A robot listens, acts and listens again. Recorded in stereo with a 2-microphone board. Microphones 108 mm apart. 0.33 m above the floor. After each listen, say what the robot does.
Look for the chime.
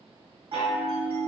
Turn 60° right.
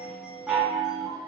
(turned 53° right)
Found it: a chime, straight ahead.